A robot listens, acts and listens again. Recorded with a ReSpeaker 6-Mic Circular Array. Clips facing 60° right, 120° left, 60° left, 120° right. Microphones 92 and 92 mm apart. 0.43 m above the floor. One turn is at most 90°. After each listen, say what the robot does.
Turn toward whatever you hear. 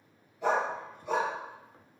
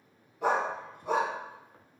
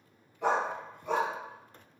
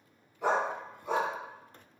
Turn 90° left.
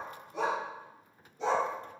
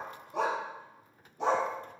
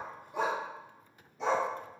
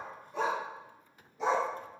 Turn 90° left.
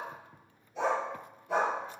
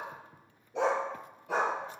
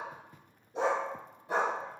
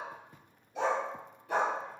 Turn 90° left.
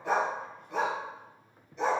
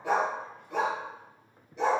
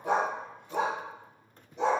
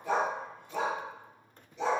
Turn 35° left.
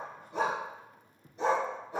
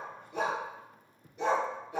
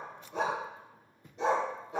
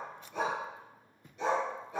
Found it: a dog barking, straight ahead.